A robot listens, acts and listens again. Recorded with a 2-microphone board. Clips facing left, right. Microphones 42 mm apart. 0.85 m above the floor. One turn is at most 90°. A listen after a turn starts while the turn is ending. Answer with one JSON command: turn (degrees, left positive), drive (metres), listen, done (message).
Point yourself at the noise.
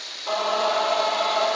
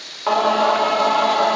{"turn": -75}
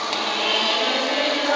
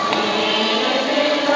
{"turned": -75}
{"turn": -10}
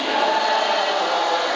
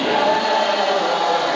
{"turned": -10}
{"done": "Found it: singing, straight ahead, under 1 m away."}